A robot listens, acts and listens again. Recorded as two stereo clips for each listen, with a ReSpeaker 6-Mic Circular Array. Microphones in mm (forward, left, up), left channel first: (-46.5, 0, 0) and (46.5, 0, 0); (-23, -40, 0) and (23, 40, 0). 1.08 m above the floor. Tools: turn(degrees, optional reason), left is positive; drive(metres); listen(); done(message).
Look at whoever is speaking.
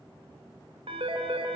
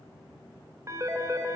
listen()
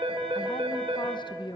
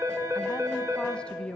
turn(degrees=160, reason="The woman speaking: 160° left.")
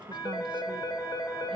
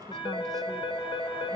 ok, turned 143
turn(degrees=20, reason="Nothing new. It was at 20° left.")
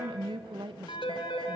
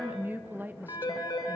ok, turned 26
turn(degrees=-10, reason="The woman speaking is now 10° right.")
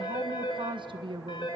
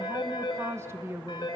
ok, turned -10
done("Found it: a woman speaking, straight ahead.")